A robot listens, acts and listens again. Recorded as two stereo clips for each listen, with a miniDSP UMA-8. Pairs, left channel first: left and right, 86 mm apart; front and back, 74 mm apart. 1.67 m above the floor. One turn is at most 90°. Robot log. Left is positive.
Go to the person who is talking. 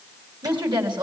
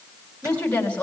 note: The woman speaking: 70° right.
cmd yaw -70
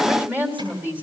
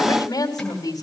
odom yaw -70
note: The woman speaking is now 20° right.
cmd yaw -20
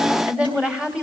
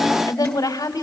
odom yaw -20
note: The woman speaking is now 10° right.
cmd yaw -10
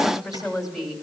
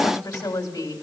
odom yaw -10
cmd fwd 1.0
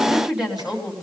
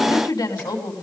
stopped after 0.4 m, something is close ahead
end: Something is in my way. I am facing the woman speaking but have not reached it.